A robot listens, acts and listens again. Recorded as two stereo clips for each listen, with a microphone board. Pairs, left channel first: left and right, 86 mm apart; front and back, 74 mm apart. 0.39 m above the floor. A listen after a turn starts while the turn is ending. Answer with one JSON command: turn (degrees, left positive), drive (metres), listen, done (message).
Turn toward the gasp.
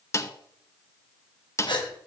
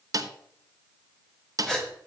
{"turn": 80}
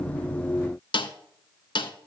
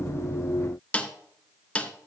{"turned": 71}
{"turn": 10}
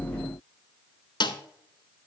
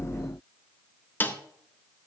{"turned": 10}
{"done": "Facing where the gasp came from. I can't hear it now."}